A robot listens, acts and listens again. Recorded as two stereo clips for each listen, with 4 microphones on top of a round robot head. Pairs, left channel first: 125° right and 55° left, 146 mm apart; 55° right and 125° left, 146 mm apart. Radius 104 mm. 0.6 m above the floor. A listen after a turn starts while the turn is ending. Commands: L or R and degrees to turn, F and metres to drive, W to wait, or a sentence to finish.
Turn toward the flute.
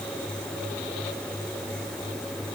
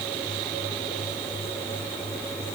W
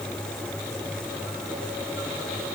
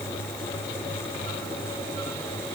W
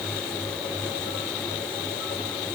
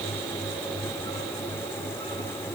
I can't make out a flute to turn to.